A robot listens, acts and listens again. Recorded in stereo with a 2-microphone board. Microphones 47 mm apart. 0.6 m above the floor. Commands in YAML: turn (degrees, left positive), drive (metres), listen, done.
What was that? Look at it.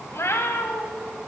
turn: 75
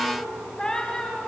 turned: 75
turn: 10
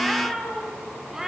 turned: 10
turn: -10
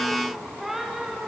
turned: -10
turn: -10
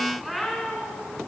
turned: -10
done: "Facing the cat meowing, over 4 m away."